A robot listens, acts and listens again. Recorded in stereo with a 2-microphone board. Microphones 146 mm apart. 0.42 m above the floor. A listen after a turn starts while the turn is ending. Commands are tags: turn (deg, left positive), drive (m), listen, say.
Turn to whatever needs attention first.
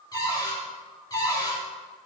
<listen/>
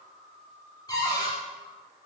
<listen/>
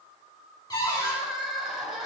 <turn deg="-30"/>
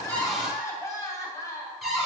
<turn deg="20"/>
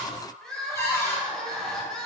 <say>Facing the crying.</say>